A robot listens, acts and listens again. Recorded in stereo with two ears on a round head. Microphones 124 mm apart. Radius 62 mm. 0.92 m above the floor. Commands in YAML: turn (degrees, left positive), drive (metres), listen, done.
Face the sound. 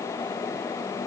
listen: true
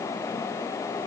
listen: true
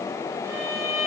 turn: -25
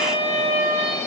turn: -130
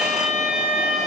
done: "Facing the violin, 2 to 4 m away."